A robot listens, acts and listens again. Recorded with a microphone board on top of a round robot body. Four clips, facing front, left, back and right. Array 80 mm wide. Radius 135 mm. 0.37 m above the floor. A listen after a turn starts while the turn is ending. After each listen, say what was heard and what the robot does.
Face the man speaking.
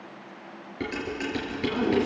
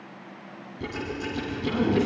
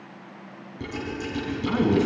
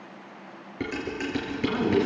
The man speaking: 155° right. Turn 155° right.
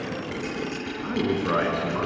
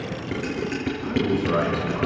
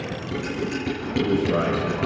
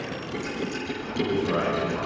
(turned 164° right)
The man speaking is now 20° left. Turn 20° left.
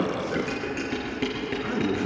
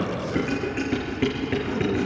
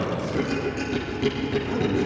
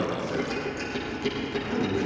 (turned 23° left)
Found it: a man speaking, straight ahead.